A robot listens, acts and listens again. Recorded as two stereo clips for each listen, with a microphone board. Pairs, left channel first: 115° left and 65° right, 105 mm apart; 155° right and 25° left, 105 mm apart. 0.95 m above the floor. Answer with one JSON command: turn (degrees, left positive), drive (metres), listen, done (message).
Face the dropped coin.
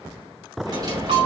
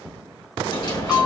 {"turn": -110}
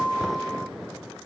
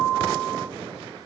{"done": "Facing where the dropped coin came from. I can't hear it now."}